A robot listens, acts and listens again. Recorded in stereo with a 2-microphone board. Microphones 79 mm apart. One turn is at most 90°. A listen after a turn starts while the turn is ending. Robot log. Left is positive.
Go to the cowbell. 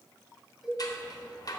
cmd yaw -30
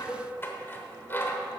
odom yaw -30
cmd idle
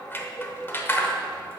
cmd idle
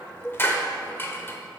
note: So it is at 150° right.
cmd yaw -90
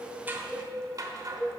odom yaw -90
note: The cowbell is now 65° right.
cmd yaw -65
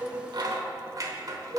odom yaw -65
cmd fwd 1.0
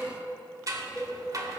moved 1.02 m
note: The cowbell is now 10° left.
cmd yaw +10
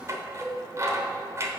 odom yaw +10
cmd fwd 1.0
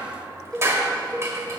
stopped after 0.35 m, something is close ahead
note: The cowbell is now 10° left.
cmd yaw +10
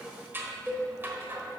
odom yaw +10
end: I am next to the cowbell.